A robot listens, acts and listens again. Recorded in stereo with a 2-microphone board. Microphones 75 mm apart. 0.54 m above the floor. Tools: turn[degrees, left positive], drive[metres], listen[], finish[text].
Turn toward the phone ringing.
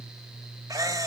Action: listen[]
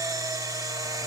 Action: listen[]
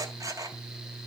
Action: finish[I can't make out a phone ringing, only a camera shutter.]